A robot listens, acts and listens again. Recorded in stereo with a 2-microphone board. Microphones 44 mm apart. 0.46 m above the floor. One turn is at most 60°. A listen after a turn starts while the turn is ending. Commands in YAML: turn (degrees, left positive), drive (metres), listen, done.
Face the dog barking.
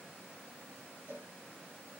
listen: true
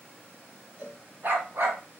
turn: -60
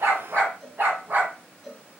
turn: -40
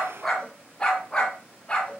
turn: 25
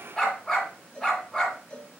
done: "Found it: a dog barking, straight ahead, 1 to 2 m away."